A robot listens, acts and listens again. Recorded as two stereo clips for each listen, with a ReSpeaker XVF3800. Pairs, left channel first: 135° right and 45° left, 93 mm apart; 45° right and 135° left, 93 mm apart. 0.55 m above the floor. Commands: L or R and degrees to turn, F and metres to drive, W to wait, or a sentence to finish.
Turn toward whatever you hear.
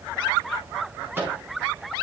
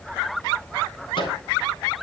R25
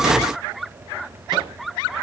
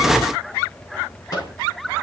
W
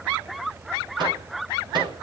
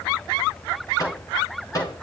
Facing the microwave, over 4 m away.